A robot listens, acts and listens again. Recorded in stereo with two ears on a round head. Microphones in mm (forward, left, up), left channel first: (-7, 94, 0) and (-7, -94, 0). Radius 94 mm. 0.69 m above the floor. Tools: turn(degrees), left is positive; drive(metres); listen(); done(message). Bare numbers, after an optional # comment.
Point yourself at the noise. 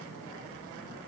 listen()
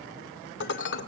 # The dishes clattering: about 60° left or 120° left.
turn(60)
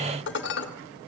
# So it is at 60° left.
turn(60)
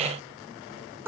# The dishes clattering is now 10° right.
turn(-10)
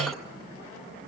listen()
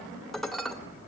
done("Found it: dishes clattering, straight ahead, 1 to 2 m away.")